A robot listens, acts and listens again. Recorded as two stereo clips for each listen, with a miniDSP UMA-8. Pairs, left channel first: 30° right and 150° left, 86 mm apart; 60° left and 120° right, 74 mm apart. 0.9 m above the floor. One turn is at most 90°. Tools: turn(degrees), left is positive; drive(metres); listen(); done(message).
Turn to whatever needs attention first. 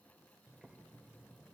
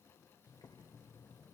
listen()
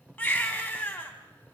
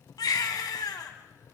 turn(degrees=40)
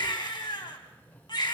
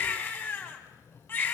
done("Found it: a baby crying, straight ahead, 2 to 4 m away.")